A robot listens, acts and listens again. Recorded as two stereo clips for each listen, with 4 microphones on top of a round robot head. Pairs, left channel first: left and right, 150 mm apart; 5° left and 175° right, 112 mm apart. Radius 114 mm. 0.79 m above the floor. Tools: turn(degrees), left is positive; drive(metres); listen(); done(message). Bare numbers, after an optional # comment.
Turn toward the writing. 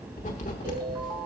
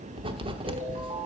# The writing: 140° left.
turn(140)
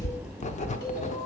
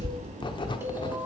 # The writing is now 50° left.
turn(50)
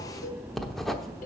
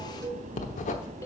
done("Found it: writing, straight ahead, under 1 m away.")